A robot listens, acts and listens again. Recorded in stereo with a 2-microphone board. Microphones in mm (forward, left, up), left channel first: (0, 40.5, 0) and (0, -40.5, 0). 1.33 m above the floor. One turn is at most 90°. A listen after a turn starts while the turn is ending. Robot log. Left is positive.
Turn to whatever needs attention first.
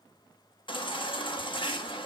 cmd yaw +90
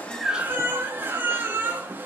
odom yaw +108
note: So it is at 25° right.
cmd yaw -25
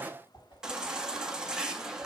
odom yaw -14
end: Facing the baby crying, under 1 m away.